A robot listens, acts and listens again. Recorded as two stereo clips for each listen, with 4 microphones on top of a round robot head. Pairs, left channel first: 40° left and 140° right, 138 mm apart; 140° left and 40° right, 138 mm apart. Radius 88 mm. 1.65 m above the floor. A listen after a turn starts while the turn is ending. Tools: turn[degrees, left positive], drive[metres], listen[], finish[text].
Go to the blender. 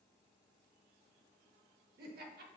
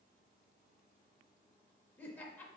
Action: listen[]
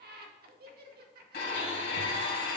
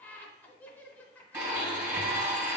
Thought: The blender: 30° left.
Action: turn[30]
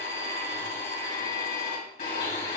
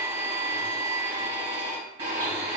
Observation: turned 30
Thought: The blender is now 10° left.
Action: turn[10]
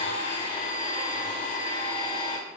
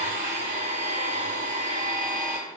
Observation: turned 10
Action: drive[1.0]
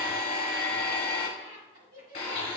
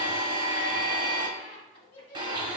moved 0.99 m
Thought: The blender is now 20° left.
Action: turn[20]
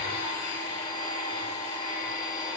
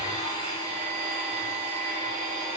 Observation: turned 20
Action: drive[1.0]
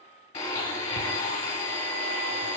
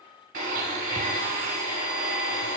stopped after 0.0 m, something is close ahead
Action: finish[Arrived at the blender, straight ahead.]